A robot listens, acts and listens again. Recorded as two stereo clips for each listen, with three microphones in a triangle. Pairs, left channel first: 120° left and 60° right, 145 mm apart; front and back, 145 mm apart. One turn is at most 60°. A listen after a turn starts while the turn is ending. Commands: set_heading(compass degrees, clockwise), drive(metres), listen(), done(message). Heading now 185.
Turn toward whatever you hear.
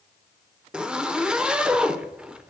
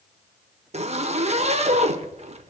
set_heading(245)
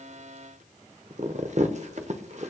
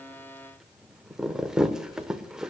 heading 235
set_heading(295)
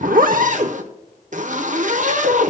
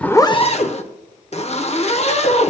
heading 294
set_heading(329)
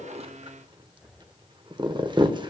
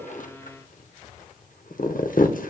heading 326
done("Facing the zipper.")